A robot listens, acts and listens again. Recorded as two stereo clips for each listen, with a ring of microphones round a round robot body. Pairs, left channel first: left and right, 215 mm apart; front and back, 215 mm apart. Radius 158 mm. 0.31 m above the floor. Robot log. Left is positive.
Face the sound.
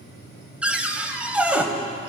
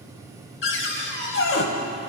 end: Found it: a cupboard door, straight ahead, 1 to 2 m away.